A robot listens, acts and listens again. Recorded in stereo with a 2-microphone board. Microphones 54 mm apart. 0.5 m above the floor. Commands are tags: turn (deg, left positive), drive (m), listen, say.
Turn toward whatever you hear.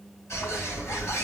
<turn deg="60"/>
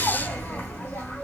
<turn deg="40"/>
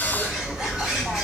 <turn deg="-10"/>
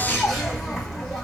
<say>Found it: a bird, straight ahead, 1 to 2 m away.</say>